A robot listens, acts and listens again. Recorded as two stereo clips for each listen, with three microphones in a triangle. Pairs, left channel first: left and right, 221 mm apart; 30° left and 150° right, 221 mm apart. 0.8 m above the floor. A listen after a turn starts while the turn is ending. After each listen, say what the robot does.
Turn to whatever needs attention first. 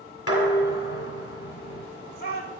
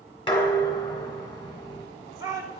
Turn 135° left.
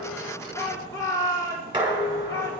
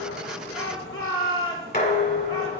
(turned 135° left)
Turn 15° left.
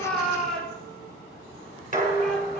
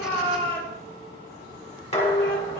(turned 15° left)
Found it: a shout, straight ahead, 2 to 4 m away.